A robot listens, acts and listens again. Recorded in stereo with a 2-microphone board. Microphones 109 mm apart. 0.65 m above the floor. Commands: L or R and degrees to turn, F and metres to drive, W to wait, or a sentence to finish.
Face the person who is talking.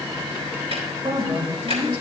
R50
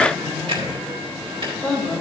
Facing the woman speaking.